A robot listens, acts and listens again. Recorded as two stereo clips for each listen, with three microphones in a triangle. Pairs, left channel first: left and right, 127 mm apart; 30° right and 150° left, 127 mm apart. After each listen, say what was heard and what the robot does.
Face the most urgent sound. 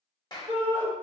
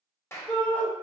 The shout: 110° right. Turn 110° right.
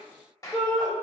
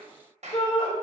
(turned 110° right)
Found it: a shout, straight ahead, 1 to 2 m away.